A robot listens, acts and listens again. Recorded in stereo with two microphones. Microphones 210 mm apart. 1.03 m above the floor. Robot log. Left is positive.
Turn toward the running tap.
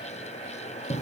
cmd idle
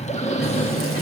cmd yaw +90
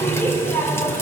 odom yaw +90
note: So it is at 10° left.
cmd yaw +10
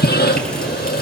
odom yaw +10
cmd idle
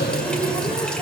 end: Facing the running tap, 2 to 4 m away.